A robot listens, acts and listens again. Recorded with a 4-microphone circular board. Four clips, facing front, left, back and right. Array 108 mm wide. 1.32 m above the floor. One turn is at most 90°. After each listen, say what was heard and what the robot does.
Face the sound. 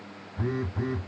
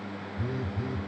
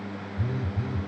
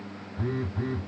The phone buzzing: 25° right. Turn 25° right.
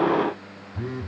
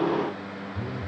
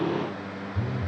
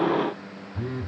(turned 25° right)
The phone buzzing is now 30° right. Turn 30° right.
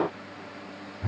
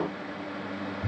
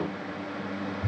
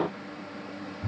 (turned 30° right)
Facing the phone buzzing.